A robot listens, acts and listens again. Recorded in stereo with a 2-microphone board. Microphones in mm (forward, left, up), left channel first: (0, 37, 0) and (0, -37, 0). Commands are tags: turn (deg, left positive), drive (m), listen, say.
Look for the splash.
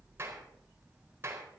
<listen/>
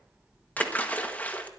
<turn deg="20"/>
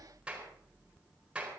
<listen/>
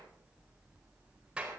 <say>I heard a splash, but can't make it out now. It was about straight ahead or 140° left.</say>